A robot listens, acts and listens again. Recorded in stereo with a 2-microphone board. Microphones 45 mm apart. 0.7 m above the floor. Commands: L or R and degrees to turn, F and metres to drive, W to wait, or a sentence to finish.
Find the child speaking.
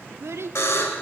R90
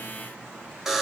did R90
W
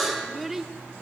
Facing the child speaking, 1 to 2 m away.